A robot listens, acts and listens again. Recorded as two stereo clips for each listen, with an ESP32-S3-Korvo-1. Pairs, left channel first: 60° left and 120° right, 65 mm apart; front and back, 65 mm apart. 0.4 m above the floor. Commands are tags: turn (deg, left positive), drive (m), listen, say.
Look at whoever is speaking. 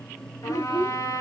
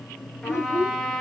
<turn deg="40"/>
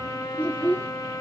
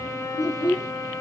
<say>Found it: a child speaking, straight ahead.</say>